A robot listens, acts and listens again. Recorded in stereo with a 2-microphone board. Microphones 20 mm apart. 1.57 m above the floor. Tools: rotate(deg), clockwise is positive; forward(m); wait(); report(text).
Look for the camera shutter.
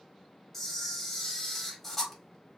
rotate(-30)
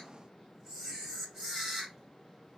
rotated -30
rotate(20)
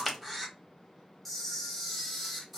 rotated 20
report("Facing the camera shutter.")